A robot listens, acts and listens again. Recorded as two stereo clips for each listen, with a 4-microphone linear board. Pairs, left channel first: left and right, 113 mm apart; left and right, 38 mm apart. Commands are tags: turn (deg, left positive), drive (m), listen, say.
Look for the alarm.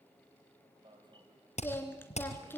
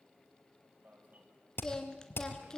<turn deg="-40"/>
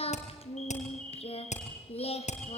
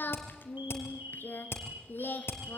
<turn deg="-90"/>
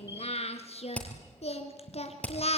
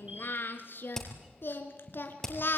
<listen/>
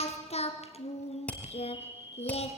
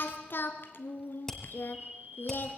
<turn deg="-25"/>
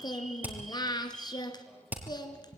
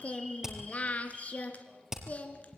<listen/>
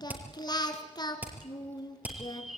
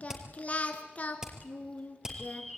<say>Found it: an alarm, straight ahead, 2 to 4 m away.</say>